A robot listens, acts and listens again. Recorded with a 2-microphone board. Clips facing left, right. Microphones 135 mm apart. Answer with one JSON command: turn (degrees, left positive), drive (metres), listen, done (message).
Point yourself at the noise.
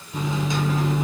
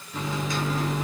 {"turn": 20}
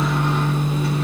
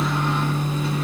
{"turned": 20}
{"turn": 135}
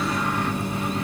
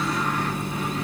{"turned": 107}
{"turn": 30}
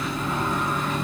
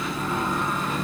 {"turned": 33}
{"done": "Facing the microwave, 1 to 2 m away."}